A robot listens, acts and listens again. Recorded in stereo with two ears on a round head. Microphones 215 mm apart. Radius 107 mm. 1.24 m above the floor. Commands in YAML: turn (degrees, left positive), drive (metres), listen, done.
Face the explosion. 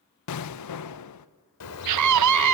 turn: 75
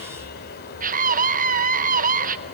listen: true
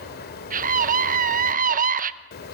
done: "I heard an explosion, but can't make it out now. It was about straight ahead or 30° left."